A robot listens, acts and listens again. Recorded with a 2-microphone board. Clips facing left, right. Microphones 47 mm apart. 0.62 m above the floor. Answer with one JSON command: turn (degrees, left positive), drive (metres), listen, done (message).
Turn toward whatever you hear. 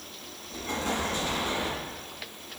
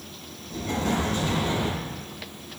{"turn": 20}
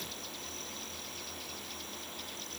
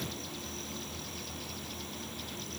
{"listen": true}
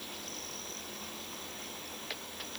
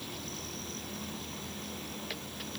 {"done": "I heard an explosion, but can't make it out now. It was about straight ahead or 140° left."}